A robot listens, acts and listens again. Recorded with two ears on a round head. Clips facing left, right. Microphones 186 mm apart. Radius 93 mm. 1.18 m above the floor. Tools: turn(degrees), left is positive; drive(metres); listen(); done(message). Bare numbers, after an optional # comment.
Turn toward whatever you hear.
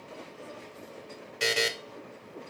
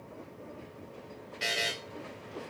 # The buzzer: about 65° left or 115° left.
turn(65)
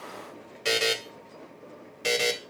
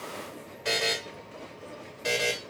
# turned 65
# So it is at 40° left.
turn(40)
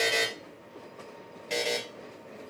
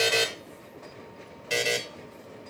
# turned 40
done("Found it: a buzzer, straight ahead.")